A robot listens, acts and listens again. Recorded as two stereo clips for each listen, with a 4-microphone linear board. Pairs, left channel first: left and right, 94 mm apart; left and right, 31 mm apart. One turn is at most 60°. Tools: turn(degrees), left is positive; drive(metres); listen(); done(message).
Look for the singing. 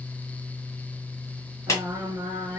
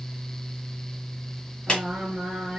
turn(degrees=-25)
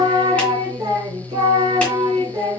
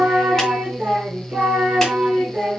turn(degrees=-60)
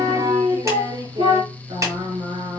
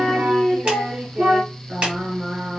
turn(degrees=-60)
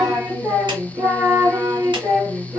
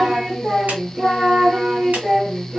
turn(degrees=-20)
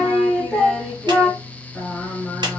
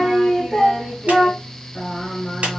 done("Found it: singing, straight ahead.")